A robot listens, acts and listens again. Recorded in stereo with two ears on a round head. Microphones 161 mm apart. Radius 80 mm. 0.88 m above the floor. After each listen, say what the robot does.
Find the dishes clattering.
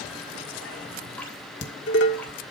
Turn 70° left.
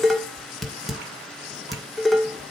Found it: dishes clattering, straight ahead, 1 to 2 m away.